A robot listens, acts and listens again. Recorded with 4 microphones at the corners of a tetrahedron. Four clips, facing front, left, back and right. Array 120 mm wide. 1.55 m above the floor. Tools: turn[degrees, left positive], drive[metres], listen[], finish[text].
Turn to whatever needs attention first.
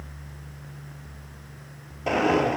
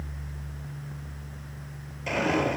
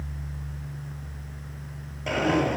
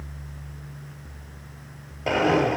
Action: listen[]
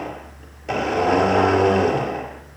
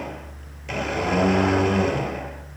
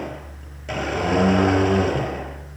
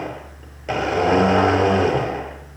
Action: listen[]
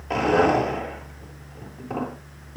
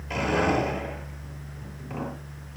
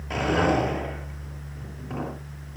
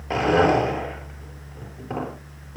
Action: finish[I can't make out anything urgent to turn to.]